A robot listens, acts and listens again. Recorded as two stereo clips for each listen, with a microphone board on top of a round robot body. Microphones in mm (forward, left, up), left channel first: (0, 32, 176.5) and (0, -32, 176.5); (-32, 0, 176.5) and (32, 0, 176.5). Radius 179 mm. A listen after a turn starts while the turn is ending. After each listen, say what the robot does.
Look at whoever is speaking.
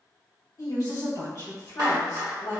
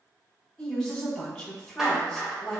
Turn 95° left.
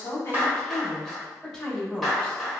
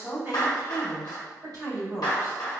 Facing the woman speaking, 1 to 2 m away.